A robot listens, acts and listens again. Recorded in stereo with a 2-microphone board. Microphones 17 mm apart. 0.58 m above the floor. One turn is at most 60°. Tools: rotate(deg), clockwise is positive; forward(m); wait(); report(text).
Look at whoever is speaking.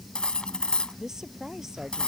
rotate(25)
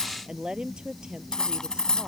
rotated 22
rotate(60)
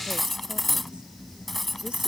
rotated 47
rotate(60)
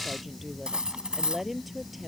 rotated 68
rotate(15)
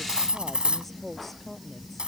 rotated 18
report("Found it: a woman speaking, straight ahead.")